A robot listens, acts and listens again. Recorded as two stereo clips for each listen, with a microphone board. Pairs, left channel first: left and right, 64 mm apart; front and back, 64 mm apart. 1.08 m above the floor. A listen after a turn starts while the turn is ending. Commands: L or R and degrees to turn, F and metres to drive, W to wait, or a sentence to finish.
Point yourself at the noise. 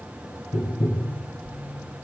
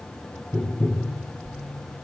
L85
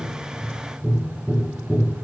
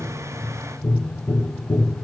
Facing the tapping, 1 to 2 m away.